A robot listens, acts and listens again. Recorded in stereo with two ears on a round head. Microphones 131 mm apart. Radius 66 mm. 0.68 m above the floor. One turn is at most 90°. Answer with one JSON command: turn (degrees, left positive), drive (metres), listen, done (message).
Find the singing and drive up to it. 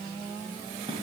{"listen": true}
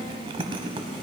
{"listen": true}
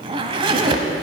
{"done": "I can't make out singing to turn to."}